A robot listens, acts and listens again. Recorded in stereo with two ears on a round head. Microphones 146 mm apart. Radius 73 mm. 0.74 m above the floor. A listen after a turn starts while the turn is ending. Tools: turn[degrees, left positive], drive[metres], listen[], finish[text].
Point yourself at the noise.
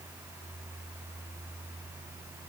Action: listen[]
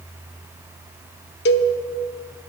Thought: The cowbell: about 70° left or 110° left.
Action: turn[70]
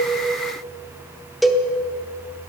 Action: finish[Found it: a cowbell, straight ahead.]